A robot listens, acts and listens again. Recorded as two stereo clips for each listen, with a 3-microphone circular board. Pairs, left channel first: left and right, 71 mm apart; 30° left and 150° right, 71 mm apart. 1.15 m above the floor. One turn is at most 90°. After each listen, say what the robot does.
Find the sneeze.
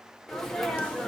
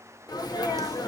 Facing the sneeze, 1 to 2 m away.